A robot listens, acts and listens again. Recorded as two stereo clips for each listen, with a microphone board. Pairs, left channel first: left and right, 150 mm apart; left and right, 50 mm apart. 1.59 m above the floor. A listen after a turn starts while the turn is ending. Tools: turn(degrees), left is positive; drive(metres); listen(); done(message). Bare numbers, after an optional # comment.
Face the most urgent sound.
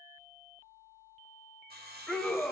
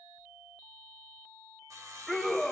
turn(30)
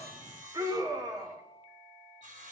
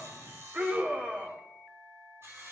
# So it is at 25° right.
turn(-25)
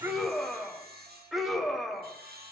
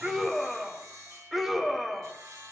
done("Facing the scream.")